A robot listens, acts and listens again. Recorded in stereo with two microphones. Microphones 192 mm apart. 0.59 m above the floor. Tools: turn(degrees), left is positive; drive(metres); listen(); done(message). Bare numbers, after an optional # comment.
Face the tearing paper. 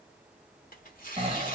# The tearing paper: about 45° left or 135° left.
turn(45)
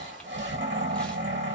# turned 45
listen()
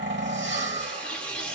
done("Facing the tearing paper.")